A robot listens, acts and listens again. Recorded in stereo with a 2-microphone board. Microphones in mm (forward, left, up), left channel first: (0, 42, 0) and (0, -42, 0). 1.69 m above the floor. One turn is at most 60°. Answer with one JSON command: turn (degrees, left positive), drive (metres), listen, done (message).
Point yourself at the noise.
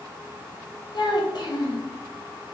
{"turn": 60}
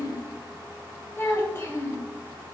{"turn": 35}
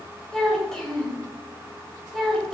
{"done": "Facing the child speaking, under 1 m away."}